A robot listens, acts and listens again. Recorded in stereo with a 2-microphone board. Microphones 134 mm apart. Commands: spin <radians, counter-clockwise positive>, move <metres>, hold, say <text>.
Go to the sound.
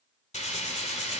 spin 1.05
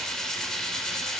move 1.0
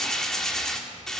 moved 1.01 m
move 1.0
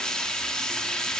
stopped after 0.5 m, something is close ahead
spin 0.17
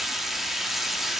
say I am next to the frying.